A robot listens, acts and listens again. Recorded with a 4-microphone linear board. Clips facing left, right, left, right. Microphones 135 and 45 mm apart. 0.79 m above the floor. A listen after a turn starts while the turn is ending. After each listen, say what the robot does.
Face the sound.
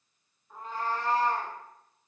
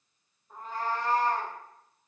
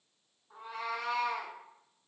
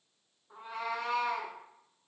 Turn 35° right.
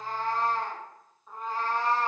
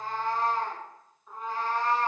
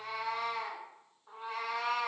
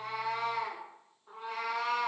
Found it: a cat meowing, straight ahead, 1 to 2 m away.